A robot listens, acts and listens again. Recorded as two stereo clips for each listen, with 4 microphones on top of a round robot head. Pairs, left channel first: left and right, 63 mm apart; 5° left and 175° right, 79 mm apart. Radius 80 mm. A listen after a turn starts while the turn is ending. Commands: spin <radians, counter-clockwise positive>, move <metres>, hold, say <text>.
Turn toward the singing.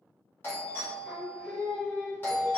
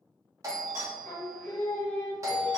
spin 1.05
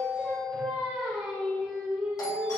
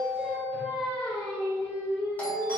spin -0.17
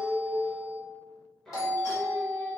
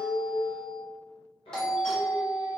say Found it: singing, straight ahead.